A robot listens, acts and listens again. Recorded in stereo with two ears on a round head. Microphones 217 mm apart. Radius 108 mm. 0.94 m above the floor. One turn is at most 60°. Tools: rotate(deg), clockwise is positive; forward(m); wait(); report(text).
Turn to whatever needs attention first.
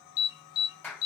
rotate(-60)
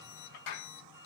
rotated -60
wait()
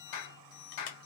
wait()
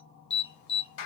rotate(-50)
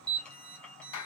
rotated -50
report("Found it: an alarm, straight ahead.")